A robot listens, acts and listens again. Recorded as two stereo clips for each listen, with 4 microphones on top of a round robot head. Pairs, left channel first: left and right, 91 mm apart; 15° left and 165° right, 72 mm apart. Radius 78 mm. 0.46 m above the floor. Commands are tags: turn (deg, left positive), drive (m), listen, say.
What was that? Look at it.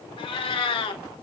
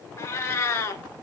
<turn deg="65"/>
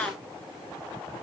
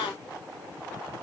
<turn deg="10"/>
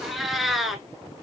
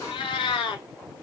<say>Facing the cat meowing, under 1 m away.</say>